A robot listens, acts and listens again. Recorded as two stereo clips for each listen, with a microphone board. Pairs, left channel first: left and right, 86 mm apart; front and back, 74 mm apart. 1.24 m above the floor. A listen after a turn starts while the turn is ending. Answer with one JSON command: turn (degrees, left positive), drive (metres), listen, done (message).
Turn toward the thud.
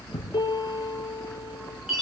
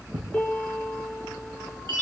{"turn": 145}
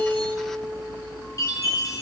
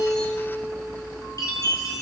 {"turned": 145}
{"done": "Facing where the thud came from. I can't hear it now."}